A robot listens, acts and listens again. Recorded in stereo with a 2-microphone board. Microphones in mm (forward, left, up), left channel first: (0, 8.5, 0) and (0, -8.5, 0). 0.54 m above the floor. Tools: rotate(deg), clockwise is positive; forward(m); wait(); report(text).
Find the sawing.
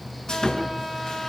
rotate(-30)
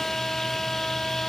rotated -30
wait()
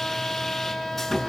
report("Facing the sawing, over 4 m away.")